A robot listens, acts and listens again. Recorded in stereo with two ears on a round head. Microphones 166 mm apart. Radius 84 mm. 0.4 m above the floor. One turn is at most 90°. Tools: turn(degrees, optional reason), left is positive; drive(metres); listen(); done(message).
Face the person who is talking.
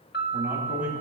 turn(degrees=-30)
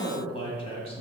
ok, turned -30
turn(degrees=35, reason="So it is at 35° left.")
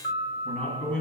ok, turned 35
turn(degrees=10, reason="The man speaking is now 10° left.")
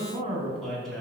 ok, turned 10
done("Facing the man speaking.")